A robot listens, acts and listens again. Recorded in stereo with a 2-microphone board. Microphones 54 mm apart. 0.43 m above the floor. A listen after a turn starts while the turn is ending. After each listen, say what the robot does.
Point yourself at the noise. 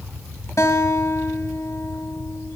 Turn 75° left.
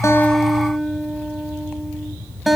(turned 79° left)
Facing the guitar, 1 to 2 m away.